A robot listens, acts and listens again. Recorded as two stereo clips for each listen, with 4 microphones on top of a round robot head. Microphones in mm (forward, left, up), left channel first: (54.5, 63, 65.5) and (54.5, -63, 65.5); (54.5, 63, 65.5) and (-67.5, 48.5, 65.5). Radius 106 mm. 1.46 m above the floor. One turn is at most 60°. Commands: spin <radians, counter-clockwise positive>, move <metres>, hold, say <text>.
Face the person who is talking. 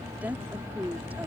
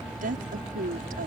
spin -1.05
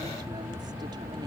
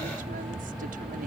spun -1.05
spin -1.05
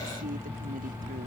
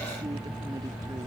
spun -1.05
spin -0.87
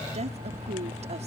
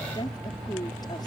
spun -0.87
spin -1.05
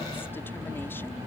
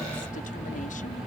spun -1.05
hold
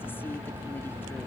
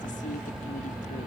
hold
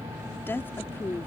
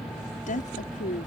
spin 0.26
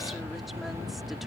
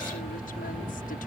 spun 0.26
hold
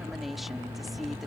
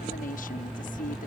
say Found it: a woman speaking, straight ahead.